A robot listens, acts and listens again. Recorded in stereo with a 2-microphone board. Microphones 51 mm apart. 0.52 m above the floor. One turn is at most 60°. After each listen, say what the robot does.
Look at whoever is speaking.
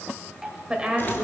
Turn 20° right.
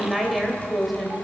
Facing the woman speaking, 2 to 4 m away.